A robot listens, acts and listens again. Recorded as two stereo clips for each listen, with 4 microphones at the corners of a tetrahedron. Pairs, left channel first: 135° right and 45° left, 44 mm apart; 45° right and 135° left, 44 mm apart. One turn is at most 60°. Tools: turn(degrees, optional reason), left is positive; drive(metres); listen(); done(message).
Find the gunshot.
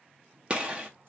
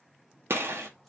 turn(degrees=60, reason="The gunshot: 110° left.")
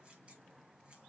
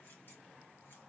turn(degrees=50, reason="Nothing new. It was at 50° left.")
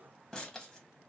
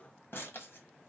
done("Facing where the gunshot came from. I can't hear it now.")